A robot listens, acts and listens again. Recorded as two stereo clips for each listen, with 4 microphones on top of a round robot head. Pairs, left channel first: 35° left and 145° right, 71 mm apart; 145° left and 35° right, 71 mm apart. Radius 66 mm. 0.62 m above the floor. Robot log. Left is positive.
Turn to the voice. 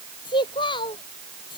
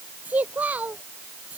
note: The child speaking: 35° left.
cmd yaw +35
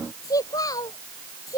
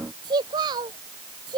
end: Found it: a child speaking, straight ahead.